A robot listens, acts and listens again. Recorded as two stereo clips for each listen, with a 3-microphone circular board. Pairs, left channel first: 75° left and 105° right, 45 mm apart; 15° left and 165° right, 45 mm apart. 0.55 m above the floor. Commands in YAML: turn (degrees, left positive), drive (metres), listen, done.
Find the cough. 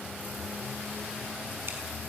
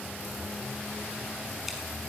listen: true
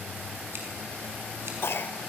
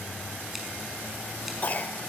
turn: 60
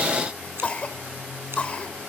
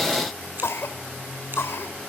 turn: 15
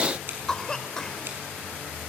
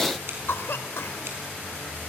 done: "Facing the cough, 1 to 2 m away."